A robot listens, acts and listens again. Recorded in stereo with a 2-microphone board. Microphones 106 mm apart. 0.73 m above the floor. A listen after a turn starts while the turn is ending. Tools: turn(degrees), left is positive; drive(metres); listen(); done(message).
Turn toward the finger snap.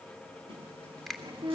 turn(degrees=30)
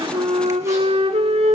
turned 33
listen()
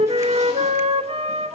listen()
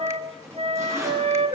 done("I heard a finger snap, but can't make it out now. It was about 30° right or 145° left.")